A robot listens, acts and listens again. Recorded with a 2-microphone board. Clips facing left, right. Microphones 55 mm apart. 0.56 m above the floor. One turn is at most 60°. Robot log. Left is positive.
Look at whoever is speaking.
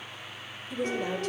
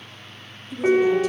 note: The woman speaking: about 50° left or 130° left.
cmd yaw +50
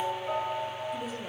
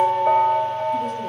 cmd idle
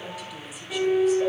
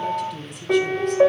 end: Facing the woman speaking, 1 to 2 m away.